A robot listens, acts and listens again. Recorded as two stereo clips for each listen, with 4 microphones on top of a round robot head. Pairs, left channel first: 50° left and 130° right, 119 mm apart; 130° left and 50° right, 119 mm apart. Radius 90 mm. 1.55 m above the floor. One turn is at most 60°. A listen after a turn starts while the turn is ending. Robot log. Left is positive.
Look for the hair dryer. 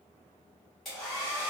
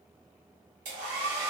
note: The hair dryer: 40° right.
cmd yaw -40
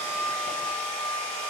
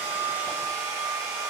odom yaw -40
end: Facing the hair dryer.